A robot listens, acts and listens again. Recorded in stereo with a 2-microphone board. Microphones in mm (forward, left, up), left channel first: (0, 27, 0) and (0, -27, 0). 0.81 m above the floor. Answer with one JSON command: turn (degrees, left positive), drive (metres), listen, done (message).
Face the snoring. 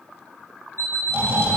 {"turn": -45}
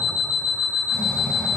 {"turn": -90}
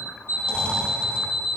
{"turn": 20}
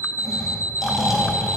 {"done": "Facing the snoring."}